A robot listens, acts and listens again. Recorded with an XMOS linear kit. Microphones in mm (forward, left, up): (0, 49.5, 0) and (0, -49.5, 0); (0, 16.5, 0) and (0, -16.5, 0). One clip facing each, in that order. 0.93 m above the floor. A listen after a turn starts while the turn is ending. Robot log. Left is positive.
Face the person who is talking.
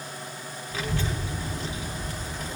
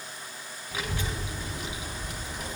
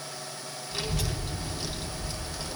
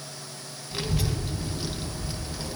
note: The child speaking: about 15° right or 165° right.
cmd yaw -15
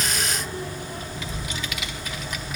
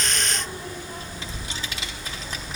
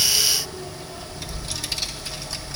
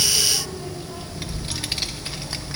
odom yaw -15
note: So it is at 150° right.
cmd yaw -150
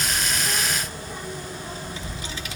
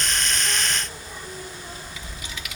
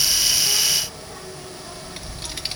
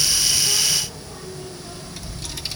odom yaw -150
note: The child speaking is now 35° left.
cmd yaw +35
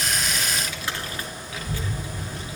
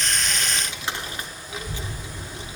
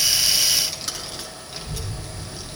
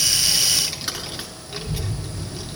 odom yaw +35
note: The child speaking is now 20° right.
cmd yaw -20
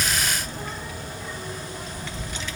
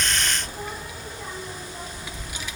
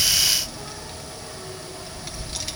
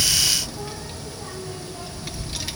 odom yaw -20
note: The child speaking is now 10° right.
cmd yaw -10
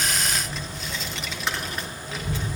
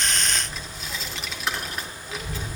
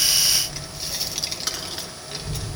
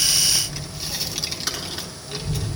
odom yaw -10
end: Facing the child speaking, under 1 m away.